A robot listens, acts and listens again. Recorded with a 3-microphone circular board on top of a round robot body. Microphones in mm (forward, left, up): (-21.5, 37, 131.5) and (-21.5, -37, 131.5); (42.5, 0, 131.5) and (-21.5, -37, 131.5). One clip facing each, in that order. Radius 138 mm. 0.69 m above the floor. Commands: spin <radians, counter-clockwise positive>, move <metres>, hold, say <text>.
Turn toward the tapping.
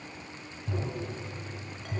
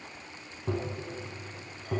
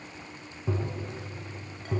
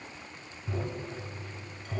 spin -0.61
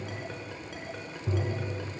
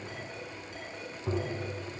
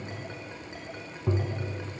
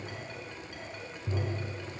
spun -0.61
spin -0.26
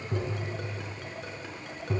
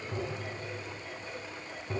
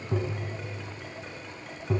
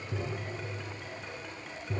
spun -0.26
say Facing the tapping.